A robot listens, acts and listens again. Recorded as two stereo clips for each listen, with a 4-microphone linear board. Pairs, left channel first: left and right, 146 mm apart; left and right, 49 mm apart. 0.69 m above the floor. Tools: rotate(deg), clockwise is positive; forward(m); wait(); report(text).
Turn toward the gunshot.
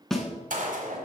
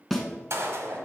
rotate(65)
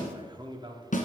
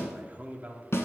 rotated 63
wait()
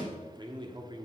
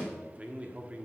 report("I heard a gunshot, but can't make it out now. It was about straight ahead or 55° right.")